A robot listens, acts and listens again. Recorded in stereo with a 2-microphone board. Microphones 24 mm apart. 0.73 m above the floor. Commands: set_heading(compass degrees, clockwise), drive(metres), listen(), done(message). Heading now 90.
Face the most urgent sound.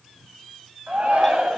set_heading(180)
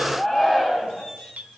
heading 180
set_heading(190)
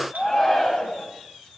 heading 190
done("Found it: a shout, straight ahead.")